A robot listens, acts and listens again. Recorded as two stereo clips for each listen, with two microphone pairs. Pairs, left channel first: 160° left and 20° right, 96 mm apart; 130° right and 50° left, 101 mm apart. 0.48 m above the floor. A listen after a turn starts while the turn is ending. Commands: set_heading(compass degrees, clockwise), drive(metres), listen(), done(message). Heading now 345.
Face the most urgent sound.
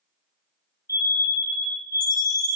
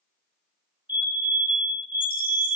set_heading(225)
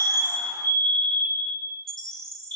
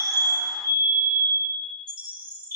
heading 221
done("Facing the fire alarm.")